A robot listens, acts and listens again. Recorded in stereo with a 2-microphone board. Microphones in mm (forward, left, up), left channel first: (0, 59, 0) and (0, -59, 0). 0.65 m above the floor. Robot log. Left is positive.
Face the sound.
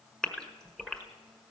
cmd yaw +30
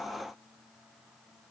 cmd idle
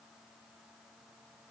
end: I heard a gasp, but can't make it out now. It was about 25° right or 145° left.